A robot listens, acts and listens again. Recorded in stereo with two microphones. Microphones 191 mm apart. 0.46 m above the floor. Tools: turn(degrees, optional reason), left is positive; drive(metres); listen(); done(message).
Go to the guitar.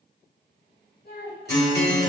turn(degrees=-60, reason="The guitar: about 60° right or 120° right.")
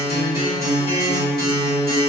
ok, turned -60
turn(degrees=-25, reason="So it is at 25° right.")
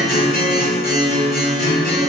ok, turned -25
drive(metres=1.0)
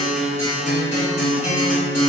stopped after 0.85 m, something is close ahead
done("I am next to the guitar.")